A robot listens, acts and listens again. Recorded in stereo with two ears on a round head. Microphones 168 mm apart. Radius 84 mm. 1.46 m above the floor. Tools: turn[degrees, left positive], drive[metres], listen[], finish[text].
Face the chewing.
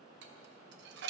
Action: listen[]
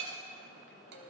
Action: listen[]
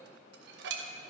Action: finish[I can't make out chewing, only dishes clattering.]